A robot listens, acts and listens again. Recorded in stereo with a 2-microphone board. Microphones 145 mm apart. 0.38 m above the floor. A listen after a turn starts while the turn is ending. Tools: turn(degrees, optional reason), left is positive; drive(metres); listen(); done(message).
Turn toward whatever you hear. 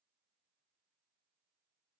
listen()
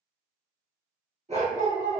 turn(degrees=-55, reason="The dog barking: about 55° right or 125° right.")
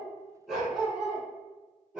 done("Found it: a dog barking, straight ahead, 2 to 4 m away.")